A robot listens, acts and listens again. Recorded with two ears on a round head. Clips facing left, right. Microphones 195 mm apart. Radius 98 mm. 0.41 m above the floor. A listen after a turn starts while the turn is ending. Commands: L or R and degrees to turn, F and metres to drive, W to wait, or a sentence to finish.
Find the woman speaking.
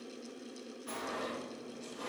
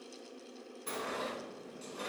W
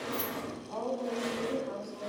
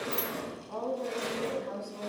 R50
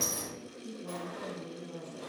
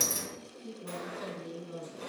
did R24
R35
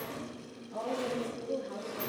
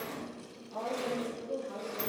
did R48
Facing the woman speaking, 2 to 4 m away.